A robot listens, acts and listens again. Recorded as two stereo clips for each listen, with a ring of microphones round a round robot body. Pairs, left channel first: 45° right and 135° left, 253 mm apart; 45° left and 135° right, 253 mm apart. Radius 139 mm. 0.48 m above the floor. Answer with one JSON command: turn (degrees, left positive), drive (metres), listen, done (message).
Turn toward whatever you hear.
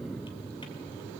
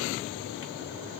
{"listen": true}
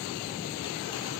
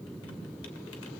{"listen": true}
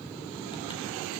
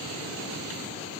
{"done": "I can't make out anything."}